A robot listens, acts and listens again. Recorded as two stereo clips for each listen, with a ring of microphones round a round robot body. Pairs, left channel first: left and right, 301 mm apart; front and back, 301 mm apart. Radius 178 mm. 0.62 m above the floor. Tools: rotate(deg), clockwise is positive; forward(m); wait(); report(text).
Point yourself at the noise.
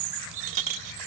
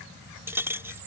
rotate(95)
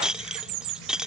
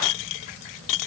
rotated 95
report("Facing the clink.")